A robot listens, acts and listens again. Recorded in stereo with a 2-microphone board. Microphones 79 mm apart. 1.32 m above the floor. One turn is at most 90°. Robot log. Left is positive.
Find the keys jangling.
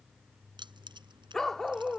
cmd yaw -90
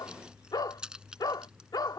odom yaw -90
note: So it is at 10° right.
cmd yaw -10
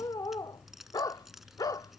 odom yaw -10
end: Facing the keys jangling.